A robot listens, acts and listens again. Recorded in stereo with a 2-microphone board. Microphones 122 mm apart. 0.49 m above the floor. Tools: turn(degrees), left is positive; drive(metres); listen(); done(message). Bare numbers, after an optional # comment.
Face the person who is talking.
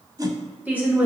turn(-30)
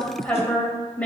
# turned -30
# So it is at 15° left.
turn(15)
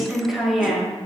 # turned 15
done("Found it: a woman speaking, straight ahead, 2 to 4 m away.")